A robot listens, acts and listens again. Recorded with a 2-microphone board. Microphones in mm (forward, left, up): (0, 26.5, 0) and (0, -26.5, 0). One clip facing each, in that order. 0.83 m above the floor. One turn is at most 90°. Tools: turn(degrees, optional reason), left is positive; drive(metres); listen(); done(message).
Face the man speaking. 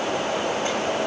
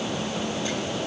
listen()
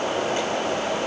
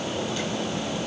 listen()
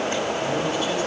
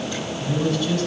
turn(degrees=20, reason="The man speaking: about 20° left or 160° left.")
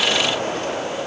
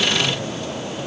listen()
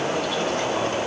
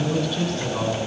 done("Found it: a man speaking, straight ahead.")